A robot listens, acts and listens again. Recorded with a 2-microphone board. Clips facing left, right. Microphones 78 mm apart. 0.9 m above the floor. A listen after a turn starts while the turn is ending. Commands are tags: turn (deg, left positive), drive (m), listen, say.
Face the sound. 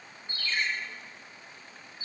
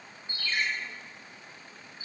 <turn deg="-15"/>
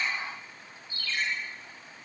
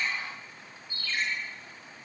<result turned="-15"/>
<turn deg="-150"/>
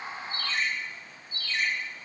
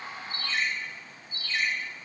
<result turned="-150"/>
<turn deg="-20"/>
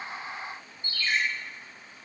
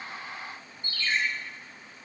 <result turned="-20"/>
<turn deg="10"/>
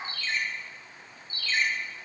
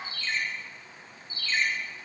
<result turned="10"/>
<say>Found it: a ringtone, straight ahead.</say>